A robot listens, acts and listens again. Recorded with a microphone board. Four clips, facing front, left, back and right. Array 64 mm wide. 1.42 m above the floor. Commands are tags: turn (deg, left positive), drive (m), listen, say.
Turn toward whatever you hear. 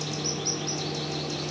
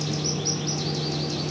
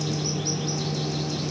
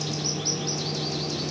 <listen/>
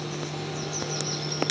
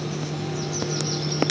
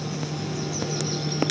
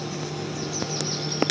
<listen/>
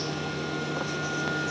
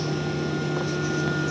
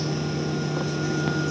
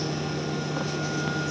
<say>I can't make out anything to turn to.</say>